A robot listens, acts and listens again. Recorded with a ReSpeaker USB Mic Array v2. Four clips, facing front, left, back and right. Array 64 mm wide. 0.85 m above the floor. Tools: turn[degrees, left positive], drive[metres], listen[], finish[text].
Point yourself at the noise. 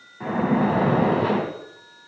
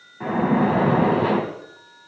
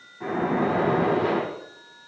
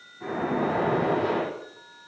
Thought: The splash: 70° left.
Action: turn[70]
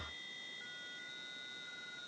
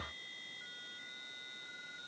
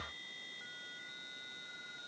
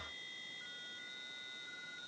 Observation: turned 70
Action: finish[I heard a splash from this way, but can't make it out now.]